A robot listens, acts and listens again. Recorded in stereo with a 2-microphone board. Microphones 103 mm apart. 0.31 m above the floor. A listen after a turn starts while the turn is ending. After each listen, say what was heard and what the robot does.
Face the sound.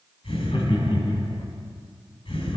The laughter: about 60° left or 120° left. Turn 60° left.
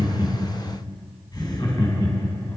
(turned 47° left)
So it is at 50° left. Turn 50° left.
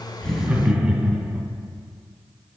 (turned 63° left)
The laughter is now 10° right. Turn 10° right.
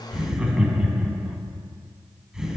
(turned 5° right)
Facing the laughter, 2 to 4 m away.